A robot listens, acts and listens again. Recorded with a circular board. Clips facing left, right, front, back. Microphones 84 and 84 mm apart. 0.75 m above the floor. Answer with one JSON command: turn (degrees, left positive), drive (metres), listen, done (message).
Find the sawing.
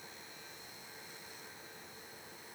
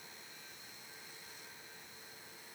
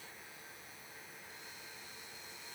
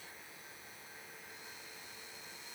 {"listen": true}
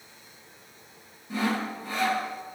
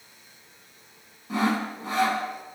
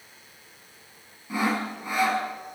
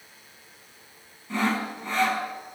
{"turn": -80}
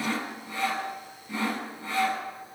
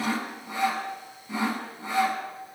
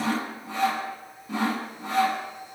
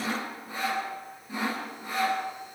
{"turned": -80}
{"turn": -20}
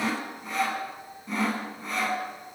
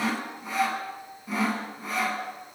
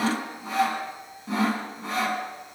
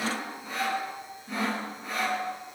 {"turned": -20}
{"done": "Found it: sawing, straight ahead, over 4 m away."}